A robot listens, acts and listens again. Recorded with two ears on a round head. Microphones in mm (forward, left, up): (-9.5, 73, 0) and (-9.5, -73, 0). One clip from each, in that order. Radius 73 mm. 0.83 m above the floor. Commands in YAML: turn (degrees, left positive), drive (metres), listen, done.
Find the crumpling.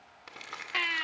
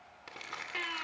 turn: 30
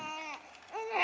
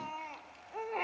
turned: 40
listen: true
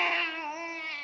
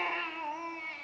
listen: true
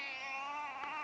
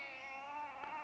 done: "I heard crumpling, but can't make it out now. It was about 30° right or 130° left."